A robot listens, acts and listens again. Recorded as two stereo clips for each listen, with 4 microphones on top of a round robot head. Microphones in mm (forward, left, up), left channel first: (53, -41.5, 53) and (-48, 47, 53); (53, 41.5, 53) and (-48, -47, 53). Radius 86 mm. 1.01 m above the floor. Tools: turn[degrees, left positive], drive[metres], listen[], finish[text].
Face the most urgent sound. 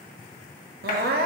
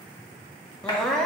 Thought: The crying: 125° left.
Action: turn[125]
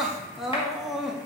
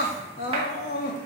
Thought: The crying is now 50° left.
Action: turn[50]
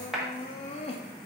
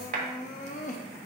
Action: finish[Facing the crying, under 1 m away.]